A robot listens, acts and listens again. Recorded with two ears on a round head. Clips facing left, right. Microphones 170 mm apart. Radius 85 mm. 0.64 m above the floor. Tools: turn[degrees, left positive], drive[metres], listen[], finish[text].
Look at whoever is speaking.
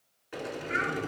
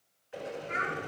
Action: turn[30]
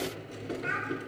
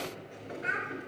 Thought: So it is at 20° right.
Action: turn[-20]
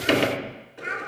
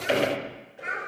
Action: finish[Found it: a child speaking, straight ahead.]